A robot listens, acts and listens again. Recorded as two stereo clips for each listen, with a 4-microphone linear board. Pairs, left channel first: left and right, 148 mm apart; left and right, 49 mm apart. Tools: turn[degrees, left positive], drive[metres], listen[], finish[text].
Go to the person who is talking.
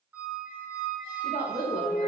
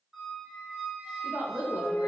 Thought: The woman speaking: about 70° right or 110° right.
Action: turn[-70]
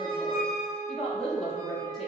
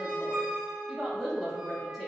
Action: drive[1.0]
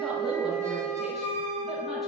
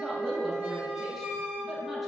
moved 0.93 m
Action: listen[]
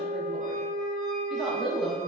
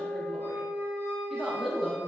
Action: drive[1.0]
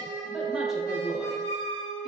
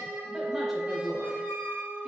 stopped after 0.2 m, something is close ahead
Action: listen[]
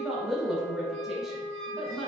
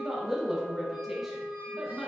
Action: finish[Arrived at the woman speaking, straight ahead.]